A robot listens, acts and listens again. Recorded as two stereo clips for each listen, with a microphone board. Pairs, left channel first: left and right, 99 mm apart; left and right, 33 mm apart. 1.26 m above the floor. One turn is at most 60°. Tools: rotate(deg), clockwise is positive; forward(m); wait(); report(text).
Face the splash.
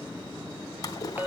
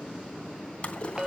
rotate(-40)
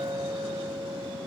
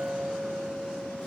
wait()
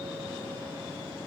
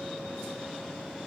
report("I heard a splash, but can't make it out now. It was about straight ahead or 100° left.")